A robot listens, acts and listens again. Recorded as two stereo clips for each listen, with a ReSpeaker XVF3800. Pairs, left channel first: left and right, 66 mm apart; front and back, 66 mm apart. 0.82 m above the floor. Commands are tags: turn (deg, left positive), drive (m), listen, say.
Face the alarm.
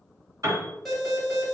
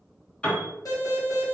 <say>Facing the alarm, 1 to 2 m away.</say>